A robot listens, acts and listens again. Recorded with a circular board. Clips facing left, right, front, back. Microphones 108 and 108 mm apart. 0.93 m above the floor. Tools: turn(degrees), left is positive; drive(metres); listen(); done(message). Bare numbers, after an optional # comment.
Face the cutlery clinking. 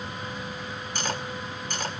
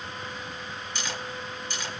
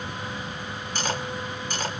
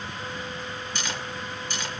# The cutlery clinking: 45° left.
turn(45)
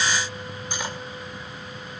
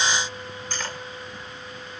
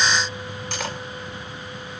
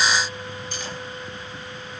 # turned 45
# The cutlery clinking is now 15° left.
turn(15)
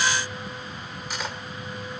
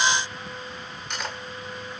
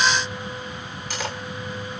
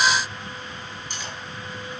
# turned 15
done("Found it: cutlery clinking, straight ahead, 2 to 4 m away.")